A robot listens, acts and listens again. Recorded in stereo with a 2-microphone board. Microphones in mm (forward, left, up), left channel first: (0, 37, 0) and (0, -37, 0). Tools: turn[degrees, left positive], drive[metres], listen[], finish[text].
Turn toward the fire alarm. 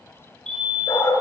Action: turn[30]
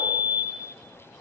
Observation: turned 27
Thought: So it is at 10° right.
Action: turn[-10]
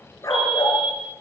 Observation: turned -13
Action: finish[Found it: a fire alarm, straight ahead, over 4 m away.]